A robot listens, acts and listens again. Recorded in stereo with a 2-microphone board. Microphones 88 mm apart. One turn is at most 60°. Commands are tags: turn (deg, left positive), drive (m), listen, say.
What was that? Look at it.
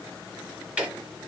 <turn deg="-30"/>
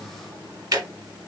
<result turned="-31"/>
<turn deg="-60"/>
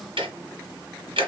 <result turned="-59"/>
<turn deg="-60"/>
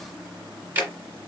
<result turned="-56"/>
<turn deg="-20"/>
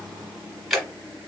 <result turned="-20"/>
<say>Found it: ticking, straight ahead.</say>